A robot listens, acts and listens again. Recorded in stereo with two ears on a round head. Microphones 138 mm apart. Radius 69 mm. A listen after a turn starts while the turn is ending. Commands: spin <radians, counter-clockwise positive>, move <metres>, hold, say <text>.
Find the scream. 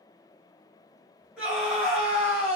spin -0.52
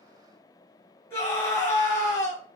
spin 0.44
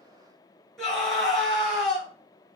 say Facing the scream.